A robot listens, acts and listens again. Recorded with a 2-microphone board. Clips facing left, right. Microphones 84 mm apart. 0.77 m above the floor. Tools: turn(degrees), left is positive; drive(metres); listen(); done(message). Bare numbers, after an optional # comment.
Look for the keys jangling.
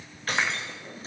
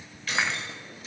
# The keys jangling: about 40° left or 140° left.
turn(40)
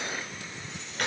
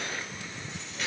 # So it is at 125° left.
turn(125)
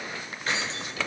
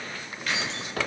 # The keys jangling is now 35° left.
turn(35)
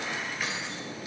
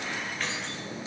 # The keys jangling is now 10° left.
turn(10)
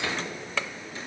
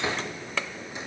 listen()
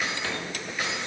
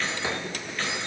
# The keys jangling is now 10° left.
turn(10)
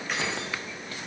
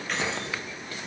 done("Found it: keys jangling, straight ahead.")